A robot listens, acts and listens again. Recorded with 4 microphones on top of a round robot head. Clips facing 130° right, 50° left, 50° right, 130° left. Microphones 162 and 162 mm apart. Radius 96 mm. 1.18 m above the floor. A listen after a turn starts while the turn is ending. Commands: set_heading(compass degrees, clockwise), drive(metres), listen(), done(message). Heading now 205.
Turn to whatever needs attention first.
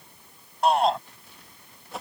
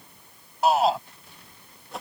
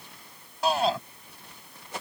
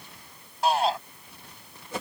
set_heading(245)
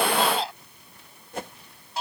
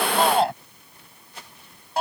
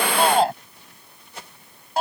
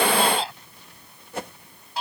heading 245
done("Found it: a shout, straight ahead.")